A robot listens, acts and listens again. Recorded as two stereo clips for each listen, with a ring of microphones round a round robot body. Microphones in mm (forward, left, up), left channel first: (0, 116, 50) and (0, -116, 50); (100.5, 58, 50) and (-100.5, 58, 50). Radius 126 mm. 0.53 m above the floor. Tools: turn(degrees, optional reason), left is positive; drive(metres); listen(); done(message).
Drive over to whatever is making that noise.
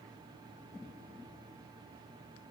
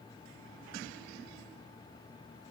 listen()
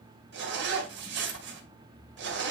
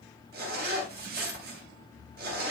turn(degrees=-130, reason="The zipper: 130° right.")
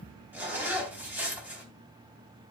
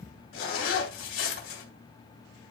drive(metres=1.0)
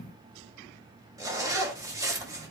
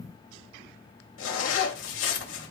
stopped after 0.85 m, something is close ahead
turn(degrees=-15, reason="The zipper is now 15° right.")
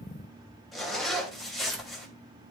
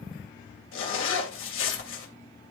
done("Something is in my way. I am facing the zipper but have not reached it.")